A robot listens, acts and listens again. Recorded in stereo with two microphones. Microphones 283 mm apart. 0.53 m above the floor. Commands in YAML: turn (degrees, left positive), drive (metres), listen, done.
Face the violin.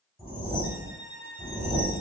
turn: -55
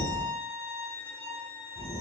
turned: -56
turn: -15
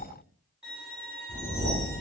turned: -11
done: "Found it: a violin, straight ahead, 1 to 2 m away."